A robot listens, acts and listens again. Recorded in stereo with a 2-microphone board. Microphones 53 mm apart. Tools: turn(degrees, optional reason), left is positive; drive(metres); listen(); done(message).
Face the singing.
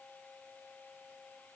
listen()
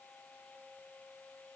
listen()
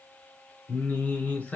turn(degrees=25, reason="The singing: about 25° left or 155° left.")
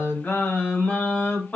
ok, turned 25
turn(degrees=30, reason="The singing: about 30° left or 150° left.")
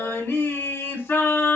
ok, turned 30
turn(degrees=130, reason="So it is at 130° left.")
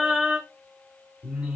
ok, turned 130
turn(degrees=-15, reason="The singing is now 15° right.")
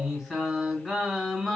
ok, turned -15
done("Facing the singing, 2 to 4 m away.")